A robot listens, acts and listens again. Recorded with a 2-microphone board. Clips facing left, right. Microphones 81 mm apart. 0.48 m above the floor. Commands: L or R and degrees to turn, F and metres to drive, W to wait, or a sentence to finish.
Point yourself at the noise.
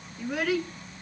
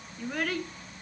L30
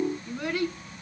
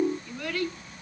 L160
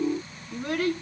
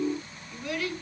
L45
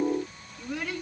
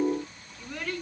L10
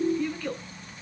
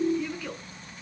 Facing the child speaking, 2 to 4 m away.